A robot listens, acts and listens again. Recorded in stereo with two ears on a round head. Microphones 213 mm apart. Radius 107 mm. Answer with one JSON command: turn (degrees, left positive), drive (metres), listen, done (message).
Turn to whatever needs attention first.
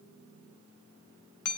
{"listen": true}
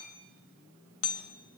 {"listen": true}
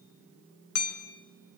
{"done": "I can't make out anything urgent, only hammering."}